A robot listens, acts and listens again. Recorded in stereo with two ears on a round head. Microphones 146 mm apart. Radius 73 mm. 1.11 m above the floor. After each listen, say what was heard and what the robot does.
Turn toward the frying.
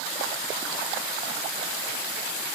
Keep listening.
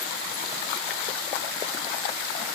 Keep listening.
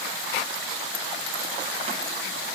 I can't make out frying to turn to.